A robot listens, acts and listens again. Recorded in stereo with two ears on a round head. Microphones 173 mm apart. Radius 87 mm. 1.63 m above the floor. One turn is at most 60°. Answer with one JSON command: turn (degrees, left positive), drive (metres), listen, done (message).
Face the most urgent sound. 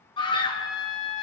{"turn": 25}
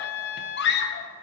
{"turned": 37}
{"turn": 60}
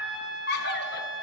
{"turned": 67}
{"turn": 50}
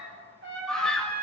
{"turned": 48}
{"done": "Found it: a scream, straight ahead, 1 to 2 m away."}